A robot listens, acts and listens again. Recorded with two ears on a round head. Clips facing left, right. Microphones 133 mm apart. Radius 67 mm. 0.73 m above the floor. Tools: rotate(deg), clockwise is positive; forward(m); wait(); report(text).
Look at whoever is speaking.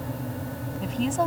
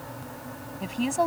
rotate(30)
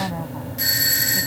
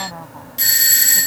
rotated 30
wait()
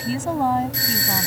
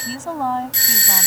rotate(-10)
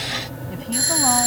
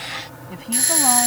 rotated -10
wait()
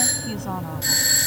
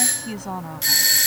rotate(10)
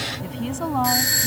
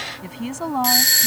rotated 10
report("Found it: a woman speaking, straight ahead.")